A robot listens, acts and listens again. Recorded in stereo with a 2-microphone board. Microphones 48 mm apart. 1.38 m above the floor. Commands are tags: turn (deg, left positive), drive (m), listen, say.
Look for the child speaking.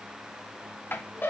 <listen/>
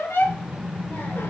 <turn deg="35"/>
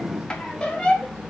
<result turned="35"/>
<turn deg="10"/>
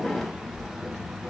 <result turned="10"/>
<turn deg="10"/>
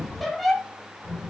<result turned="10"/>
<turn deg="10"/>
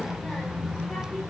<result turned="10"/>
<say>Facing the child speaking.</say>